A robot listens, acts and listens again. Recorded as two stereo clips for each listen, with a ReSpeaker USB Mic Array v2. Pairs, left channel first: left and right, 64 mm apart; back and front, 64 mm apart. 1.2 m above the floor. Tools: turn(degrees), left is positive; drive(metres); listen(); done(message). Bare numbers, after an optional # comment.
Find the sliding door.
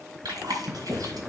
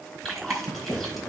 # The sliding door: 170° right.
turn(-170)
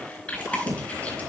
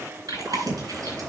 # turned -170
# The sliding door is now 60° right.
turn(-60)
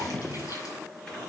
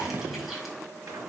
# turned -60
# The sliding door is now 10° left.
turn(10)
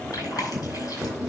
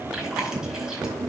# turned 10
done("Found it: a sliding door, straight ahead, 2 to 4 m away.")